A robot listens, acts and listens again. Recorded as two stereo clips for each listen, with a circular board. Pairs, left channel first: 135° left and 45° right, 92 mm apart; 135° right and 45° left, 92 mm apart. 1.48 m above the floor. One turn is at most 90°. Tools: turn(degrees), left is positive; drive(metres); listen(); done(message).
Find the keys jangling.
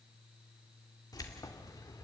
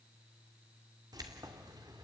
turn(degrees=85)
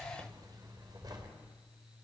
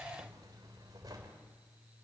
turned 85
done("Found it: keys jangling, straight ahead, over 4 m away.")